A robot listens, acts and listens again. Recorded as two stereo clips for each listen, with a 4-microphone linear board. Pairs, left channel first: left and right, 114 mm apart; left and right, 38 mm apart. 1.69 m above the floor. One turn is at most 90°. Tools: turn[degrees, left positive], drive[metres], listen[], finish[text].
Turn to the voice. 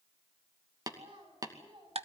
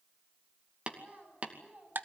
Thought: The child speaking: about 40° right or 140° right.
Action: turn[-40]
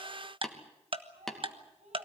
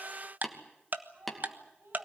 Thought: So it is at 105° right.
Action: turn[-90]
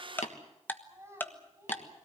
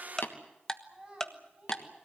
Thought: The child speaking is now 25° right.
Action: turn[-25]
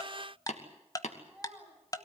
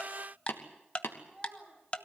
Action: finish[Facing the child speaking.]